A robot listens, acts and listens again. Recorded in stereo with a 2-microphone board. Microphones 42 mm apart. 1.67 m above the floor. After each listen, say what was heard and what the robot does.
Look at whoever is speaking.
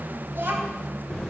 The child speaking: about 50° right or 130° right. Turn 50° right.
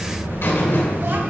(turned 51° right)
Keep listening.
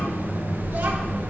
Keep listening.
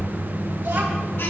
I heard a child speaking, but can't make it out now. It was about straight ahead or 80° right.